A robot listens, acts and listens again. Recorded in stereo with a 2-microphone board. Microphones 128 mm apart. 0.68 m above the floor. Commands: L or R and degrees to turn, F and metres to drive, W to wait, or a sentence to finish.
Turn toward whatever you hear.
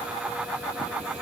W
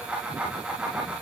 W
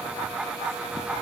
I can't make out anything to turn to.